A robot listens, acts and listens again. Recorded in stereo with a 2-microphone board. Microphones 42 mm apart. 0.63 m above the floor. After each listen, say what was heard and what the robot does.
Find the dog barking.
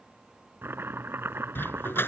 The dog barking: about 65° left or 115° left. Turn 65° left.
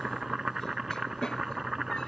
Keep listening.
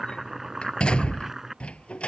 So it is at 30° left. Turn 30° left.
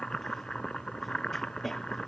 Facing the dog barking.